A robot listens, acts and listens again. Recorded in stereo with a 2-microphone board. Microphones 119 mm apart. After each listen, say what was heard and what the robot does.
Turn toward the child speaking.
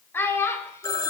The child speaking: about 20° left or 160° left. Turn 20° left.
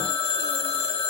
Keep listening.
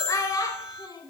The child speaking: about 30° left or 150° left. Turn 30° left.
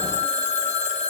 Keep listening.
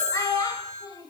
The child speaking: about 30° left or 150° left. Turn 30° left.
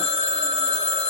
Keep listening.
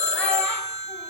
Keep listening.
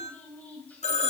I heard a child speaking, but can't make it out now. It was about straight ahead or 120° left.